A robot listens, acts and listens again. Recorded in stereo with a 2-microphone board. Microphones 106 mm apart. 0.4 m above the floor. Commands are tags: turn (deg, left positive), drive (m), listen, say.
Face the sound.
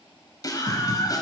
<turn deg="40"/>
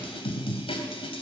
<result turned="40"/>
<turn deg="95"/>
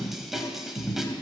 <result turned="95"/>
<say>Found it: a scream, straight ahead, 2 to 4 m away.</say>